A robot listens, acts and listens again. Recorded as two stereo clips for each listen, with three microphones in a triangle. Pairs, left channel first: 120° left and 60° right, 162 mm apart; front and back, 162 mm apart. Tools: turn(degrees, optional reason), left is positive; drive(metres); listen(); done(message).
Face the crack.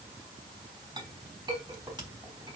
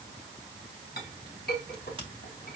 turn(degrees=-120, reason="The crack: 120° right.")
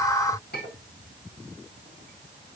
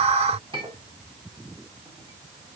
done("I heard a crack from this way, but can't make it out now.")